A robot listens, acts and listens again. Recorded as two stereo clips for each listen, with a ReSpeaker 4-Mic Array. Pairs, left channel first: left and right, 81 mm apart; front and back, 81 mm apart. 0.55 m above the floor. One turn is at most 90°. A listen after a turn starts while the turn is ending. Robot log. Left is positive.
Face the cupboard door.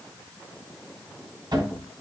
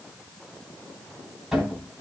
note: The cupboard door: 95° right.
cmd yaw -90
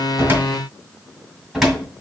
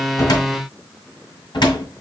end: Facing the cupboard door.